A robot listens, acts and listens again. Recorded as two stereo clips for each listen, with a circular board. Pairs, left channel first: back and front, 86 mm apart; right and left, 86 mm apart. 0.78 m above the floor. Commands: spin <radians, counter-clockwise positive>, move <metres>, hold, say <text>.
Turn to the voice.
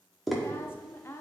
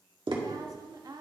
spin 2.09
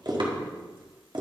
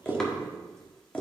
hold
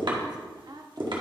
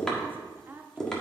spin 0.44
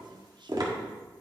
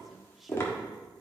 hold
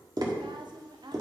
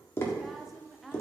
say Facing the woman speaking, under 1 m away.